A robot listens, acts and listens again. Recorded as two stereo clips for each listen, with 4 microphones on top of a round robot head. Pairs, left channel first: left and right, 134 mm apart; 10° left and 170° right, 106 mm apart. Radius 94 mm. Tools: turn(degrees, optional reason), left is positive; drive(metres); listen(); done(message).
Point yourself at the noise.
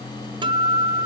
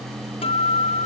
turn(degrees=-35, reason="The guitar: 35° right.")
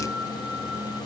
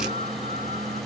listen()
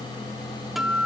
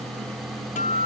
done("Found it: a guitar, straight ahead, 1 to 2 m away.")